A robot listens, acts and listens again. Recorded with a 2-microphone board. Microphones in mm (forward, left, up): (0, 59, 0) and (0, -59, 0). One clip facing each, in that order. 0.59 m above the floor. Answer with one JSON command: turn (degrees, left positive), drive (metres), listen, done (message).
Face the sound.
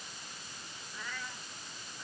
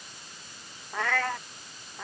{"turn": -90}
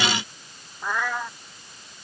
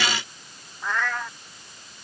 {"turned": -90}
{"turn": 10}
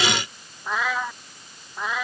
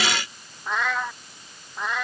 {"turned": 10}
{"done": "Found it: a cat meowing, straight ahead."}